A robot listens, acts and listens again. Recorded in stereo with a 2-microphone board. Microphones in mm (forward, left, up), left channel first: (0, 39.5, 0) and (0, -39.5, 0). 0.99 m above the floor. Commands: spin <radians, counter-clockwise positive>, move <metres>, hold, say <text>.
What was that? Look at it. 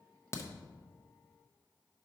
spin 0.61
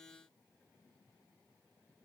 hold
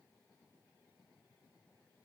say I heard a crack, but can't make it out now. It was about straight ahead or 110° left.